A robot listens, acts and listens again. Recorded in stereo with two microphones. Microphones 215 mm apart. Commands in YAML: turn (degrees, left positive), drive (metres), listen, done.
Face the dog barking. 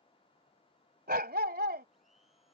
turn: -45
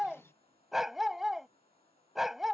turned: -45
done: "Facing the dog barking."